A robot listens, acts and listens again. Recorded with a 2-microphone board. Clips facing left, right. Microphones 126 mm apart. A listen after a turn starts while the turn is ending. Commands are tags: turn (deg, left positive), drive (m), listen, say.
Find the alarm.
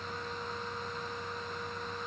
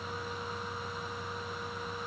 <listen/>
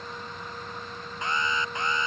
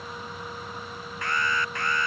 <turn deg="20"/>
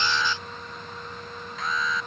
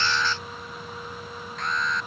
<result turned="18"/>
<say>Facing the alarm.</say>